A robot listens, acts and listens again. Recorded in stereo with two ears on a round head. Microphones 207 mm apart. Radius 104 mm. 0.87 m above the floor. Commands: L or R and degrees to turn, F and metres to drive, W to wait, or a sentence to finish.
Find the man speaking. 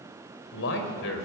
L65
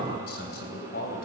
L45
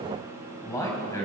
L15
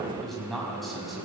Found it: a man speaking, straight ahead, over 4 m away.